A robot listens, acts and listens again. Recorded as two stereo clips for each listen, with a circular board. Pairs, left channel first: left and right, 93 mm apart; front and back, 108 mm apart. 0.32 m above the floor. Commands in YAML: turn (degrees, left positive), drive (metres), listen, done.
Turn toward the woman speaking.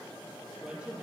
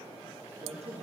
turn: -165
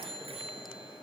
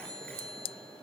listen: true
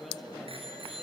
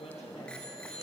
listen: true
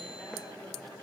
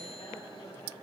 done: "I heard a woman speaking from this way, but can't make it out now."